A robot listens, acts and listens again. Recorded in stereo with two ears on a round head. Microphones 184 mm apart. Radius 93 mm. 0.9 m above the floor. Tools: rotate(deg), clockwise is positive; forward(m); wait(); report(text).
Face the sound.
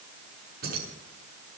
rotate(50)
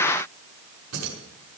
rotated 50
rotate(85)
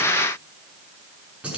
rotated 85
report("Found it: keys jangling, straight ahead.")